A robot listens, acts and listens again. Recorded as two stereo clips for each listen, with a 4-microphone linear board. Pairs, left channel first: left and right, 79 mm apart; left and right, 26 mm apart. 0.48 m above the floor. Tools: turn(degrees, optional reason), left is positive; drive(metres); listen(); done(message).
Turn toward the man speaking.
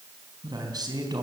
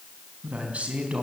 turn(degrees=-55, reason="The man speaking: about 55° right or 125° right.")
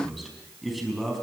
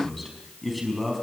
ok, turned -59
done("Found it: a man speaking, straight ahead.")